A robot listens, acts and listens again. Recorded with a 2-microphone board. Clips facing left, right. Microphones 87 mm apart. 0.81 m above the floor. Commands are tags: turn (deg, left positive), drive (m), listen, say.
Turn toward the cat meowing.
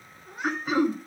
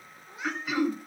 <turn deg="75"/>
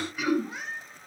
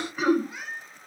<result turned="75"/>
<turn deg="30"/>
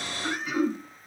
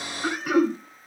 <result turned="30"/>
<listen/>
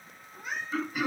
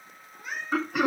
<say>Facing the cat meowing.</say>